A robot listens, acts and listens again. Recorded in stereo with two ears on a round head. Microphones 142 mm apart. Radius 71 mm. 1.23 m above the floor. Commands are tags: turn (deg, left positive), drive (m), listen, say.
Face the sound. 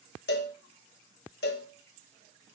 <turn deg="70"/>
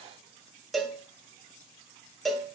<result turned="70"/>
<say>Found it: a cowbell, straight ahead, 1 to 2 m away.</say>